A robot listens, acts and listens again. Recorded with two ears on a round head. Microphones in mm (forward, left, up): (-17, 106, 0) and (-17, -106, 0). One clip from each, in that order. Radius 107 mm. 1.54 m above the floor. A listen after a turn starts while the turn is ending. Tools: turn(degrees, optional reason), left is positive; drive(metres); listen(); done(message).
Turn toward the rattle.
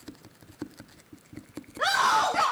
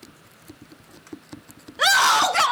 listen()
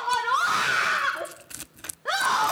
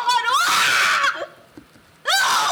listen()
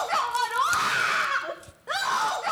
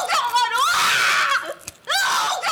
done("I can't make out a rattle to turn to.")